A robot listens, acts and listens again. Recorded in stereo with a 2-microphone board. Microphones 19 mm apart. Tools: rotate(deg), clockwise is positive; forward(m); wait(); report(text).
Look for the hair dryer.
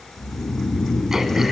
wait()
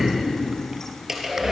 rotate(25)
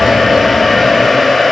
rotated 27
report("Found it: a hair dryer, straight ahead, over 4 m away.")